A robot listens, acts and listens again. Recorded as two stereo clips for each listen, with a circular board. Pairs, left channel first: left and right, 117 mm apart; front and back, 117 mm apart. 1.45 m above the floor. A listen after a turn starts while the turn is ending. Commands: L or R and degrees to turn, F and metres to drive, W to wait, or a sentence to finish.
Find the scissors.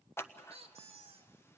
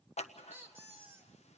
L20
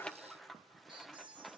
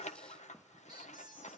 Found it: scissors, straight ahead.